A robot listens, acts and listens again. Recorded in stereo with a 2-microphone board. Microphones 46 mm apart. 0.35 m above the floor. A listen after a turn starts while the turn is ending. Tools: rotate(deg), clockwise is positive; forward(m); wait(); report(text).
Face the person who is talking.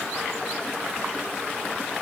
wait()
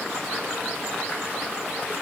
wait()
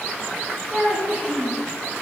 rotate(30)
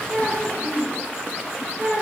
rotate(125)
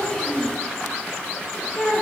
rotate(-20)
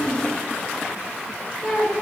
report("Found it: a child speaking, straight ahead.")